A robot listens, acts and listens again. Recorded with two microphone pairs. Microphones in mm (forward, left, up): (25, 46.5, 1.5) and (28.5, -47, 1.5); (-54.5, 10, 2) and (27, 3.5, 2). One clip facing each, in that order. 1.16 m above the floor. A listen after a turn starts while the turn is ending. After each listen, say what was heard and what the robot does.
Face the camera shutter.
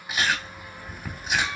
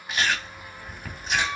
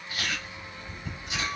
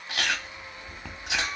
Keep listening.
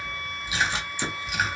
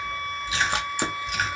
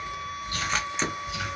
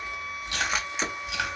The camera shutter: 90° right. Turn 90° right.
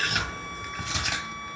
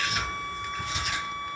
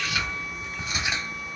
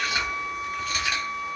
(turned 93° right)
Keep listening.
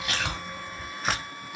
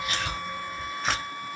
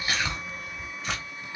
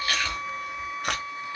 Found it: a camera shutter, straight ahead.